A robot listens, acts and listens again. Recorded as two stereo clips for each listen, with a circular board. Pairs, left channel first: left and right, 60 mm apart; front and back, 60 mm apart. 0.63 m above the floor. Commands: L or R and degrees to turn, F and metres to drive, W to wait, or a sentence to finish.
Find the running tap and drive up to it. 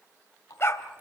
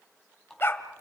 L80
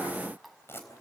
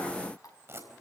F1.0
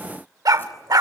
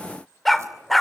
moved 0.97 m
W
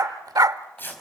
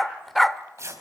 W
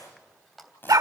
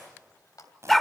F1.0
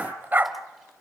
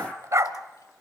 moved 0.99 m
W
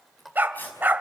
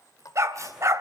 F1.0
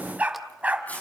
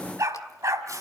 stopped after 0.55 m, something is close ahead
W
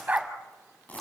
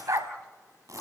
W
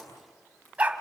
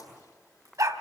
I heard a running tap from this way, but can't make it out now. I did not reach it.